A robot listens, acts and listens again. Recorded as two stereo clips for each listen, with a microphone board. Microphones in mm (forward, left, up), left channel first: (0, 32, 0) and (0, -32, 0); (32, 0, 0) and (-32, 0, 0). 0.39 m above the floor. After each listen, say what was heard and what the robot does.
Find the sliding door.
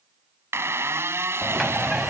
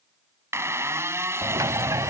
The sliding door: straight behind. Turn 180° left.
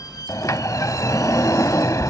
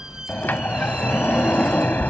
The sliding door is now 60° left. Turn 60° left.
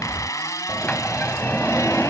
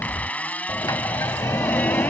The sliding door is now 20° left. Turn 20° left.
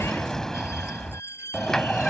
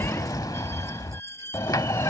The sliding door is now 10° left. Turn 10° left.
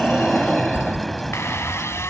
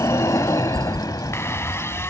Facing the sliding door.